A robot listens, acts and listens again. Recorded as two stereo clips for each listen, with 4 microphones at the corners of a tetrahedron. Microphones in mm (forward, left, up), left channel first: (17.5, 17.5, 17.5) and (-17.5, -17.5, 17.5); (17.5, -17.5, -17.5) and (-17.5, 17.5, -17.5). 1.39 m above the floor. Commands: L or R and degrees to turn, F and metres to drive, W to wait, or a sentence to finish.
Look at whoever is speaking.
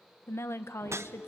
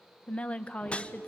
L20
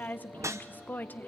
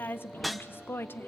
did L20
Found it: a woman speaking, straight ahead, under 1 m away.